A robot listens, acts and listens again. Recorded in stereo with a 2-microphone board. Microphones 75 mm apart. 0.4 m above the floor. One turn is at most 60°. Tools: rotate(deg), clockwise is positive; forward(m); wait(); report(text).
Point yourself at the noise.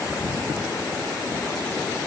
wait()
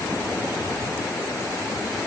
wait()
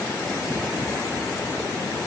report("I can't make out anything.")